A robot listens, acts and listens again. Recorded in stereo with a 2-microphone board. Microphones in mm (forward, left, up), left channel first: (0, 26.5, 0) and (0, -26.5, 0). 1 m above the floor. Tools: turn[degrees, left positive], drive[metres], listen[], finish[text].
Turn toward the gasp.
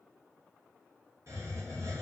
Action: listen[]
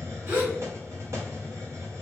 Thought: The gasp: about 55° right or 125° right.
Action: turn[-55]
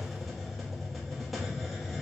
Action: listen[]
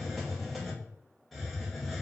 Action: finish[I heard a gasp, but can't make it out now. It was about straight ahead or 70° right.]